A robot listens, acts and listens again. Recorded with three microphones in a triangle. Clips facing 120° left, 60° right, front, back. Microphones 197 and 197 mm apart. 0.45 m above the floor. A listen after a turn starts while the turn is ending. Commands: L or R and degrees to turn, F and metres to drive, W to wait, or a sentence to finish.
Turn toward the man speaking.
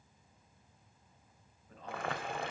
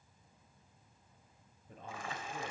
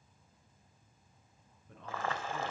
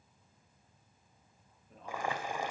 Found it: a man speaking, straight ahead, over 4 m away.